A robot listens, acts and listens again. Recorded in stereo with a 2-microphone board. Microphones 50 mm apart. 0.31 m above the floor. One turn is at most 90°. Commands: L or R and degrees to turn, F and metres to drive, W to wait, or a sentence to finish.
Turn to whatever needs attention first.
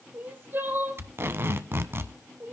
R40
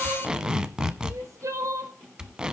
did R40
R90
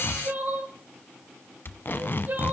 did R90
R40
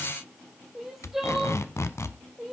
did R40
Found it: crying, straight ahead.